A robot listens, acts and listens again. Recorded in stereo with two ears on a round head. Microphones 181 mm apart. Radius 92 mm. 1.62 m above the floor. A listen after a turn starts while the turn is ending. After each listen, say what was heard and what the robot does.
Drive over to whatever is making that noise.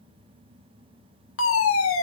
The fire alarm: about 75° left or 105° left. Turn 75° left.
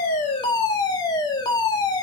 So it is at 20° left. Turn 20° left.
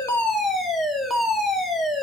Drive 1.0 m forward.
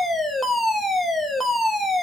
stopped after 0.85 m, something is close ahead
I am next to the fire alarm.